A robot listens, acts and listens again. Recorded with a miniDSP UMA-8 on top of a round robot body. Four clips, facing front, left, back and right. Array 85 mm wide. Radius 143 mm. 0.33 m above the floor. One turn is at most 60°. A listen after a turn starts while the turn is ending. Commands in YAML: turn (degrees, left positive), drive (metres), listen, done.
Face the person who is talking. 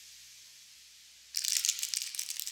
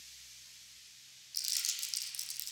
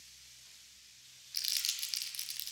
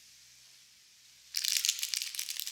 listen: true
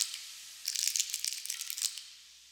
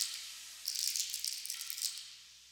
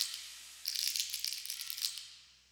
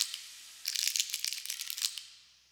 listen: true
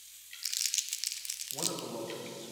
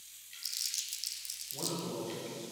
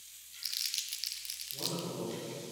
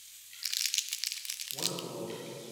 done: "Facing the man speaking, 2 to 4 m away."